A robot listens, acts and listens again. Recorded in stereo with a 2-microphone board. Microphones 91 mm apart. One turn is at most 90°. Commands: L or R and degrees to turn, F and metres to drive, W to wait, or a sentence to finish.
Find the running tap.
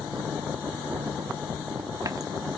W
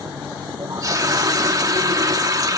R40
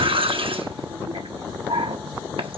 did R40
R90
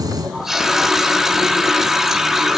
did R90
Found it: a running tap, straight ahead, 1 to 2 m away.